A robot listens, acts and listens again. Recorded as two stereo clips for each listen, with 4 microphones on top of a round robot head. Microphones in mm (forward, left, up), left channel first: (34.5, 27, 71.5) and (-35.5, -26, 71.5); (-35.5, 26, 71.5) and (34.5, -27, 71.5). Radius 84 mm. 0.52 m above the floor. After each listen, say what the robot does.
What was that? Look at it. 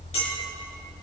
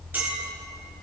Turn 35° left.
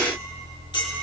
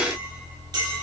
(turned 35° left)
Facing the clink.